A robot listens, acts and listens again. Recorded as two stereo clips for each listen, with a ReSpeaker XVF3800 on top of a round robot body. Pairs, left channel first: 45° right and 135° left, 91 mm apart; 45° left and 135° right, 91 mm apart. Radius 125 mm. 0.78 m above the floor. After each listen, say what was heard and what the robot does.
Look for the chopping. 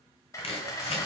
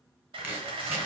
The chopping: 65° right. Turn 65° right.
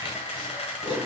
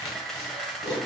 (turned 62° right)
Found it: chopping, straight ahead, 2 to 4 m away.